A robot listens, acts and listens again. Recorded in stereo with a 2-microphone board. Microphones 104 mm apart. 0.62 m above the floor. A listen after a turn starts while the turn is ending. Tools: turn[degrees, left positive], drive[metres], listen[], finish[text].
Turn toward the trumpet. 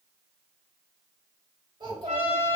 Action: turn[-90]
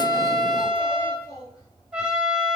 Thought: So it is at 10° right.
Action: turn[-10]
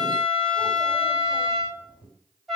Action: finish[Facing the trumpet, 1 to 2 m away.]